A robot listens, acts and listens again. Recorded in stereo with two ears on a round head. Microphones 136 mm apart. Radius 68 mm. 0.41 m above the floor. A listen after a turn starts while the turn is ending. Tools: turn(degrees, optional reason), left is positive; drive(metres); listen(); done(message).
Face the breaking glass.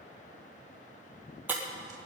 turn(degrees=-30)
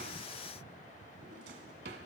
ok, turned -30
listen()
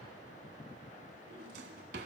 done("I heard breaking glass, but can't make it out now. It was about 15° left or 135° right.")